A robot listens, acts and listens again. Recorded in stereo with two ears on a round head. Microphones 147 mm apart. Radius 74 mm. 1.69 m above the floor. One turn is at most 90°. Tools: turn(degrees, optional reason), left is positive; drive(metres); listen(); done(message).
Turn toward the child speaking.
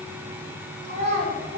turn(degrees=-40, reason="The child speaking: about 40° right or 140° right.")
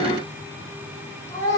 turn(degrees=20, reason="So it is at 20° left.")
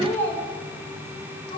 turn(degrees=30, reason="The child speaking is now 30° left.")
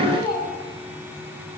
turn(degrees=25, reason="The child speaking is now 25° left.")
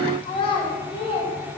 turn(degrees=30, reason="The child speaking is now 30° left.")
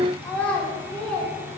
done("Found it: a child speaking, straight ahead, 2 to 4 m away.")